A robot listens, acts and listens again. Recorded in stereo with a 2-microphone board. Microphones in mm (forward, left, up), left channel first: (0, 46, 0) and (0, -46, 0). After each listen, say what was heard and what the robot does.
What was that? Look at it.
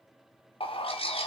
Turn 90° left.
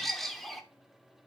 Facing the bird.